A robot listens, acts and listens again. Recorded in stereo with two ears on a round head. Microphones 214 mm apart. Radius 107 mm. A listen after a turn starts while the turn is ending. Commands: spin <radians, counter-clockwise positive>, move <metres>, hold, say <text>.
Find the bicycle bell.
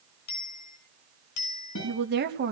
spin 1.57
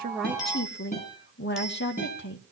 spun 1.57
say Facing the bicycle bell.